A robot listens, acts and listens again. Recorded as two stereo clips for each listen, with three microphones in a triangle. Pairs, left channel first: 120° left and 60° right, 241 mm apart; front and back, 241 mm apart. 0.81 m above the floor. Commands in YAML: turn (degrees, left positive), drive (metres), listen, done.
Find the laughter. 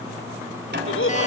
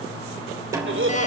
turn: 150
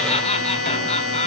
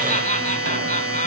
turn: 60
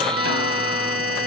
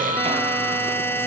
listen: true
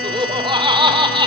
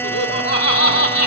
turn: 10
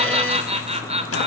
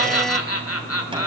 done: "Found it: laughter, straight ahead."